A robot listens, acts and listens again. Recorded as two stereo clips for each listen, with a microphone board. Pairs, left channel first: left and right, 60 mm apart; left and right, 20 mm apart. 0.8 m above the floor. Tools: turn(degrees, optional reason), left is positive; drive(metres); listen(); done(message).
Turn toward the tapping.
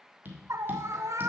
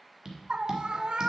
turn(degrees=-35, reason="The tapping: about 35° right or 145° right.")
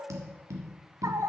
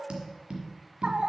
turn(degrees=-110, reason="So it is at 110° right.")
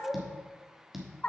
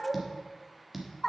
done("Found it: tapping, straight ahead, 1 to 2 m away.")